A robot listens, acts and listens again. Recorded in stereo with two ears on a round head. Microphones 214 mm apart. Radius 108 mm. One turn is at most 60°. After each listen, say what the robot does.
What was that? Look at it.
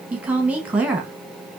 Turn 30° right.
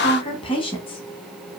Turn 25° left.
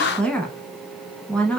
Facing the woman speaking.